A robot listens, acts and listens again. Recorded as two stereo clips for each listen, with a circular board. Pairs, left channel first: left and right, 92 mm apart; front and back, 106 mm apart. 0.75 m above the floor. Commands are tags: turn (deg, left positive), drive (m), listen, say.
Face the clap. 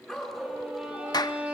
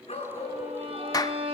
<turn deg="50"/>
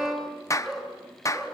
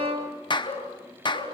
<turn deg="35"/>
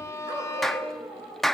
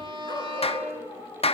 <say>Found it: a clap, straight ahead, under 1 m away.</say>